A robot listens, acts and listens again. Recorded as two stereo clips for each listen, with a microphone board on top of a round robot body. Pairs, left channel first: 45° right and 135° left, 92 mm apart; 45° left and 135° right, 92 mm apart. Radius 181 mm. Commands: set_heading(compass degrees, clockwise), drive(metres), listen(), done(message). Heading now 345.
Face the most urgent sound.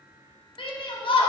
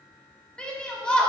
set_heading(20)
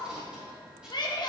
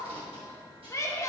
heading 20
set_heading(30)
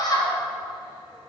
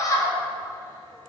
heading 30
done("Found it: a shout, straight ahead, 1 to 2 m away.")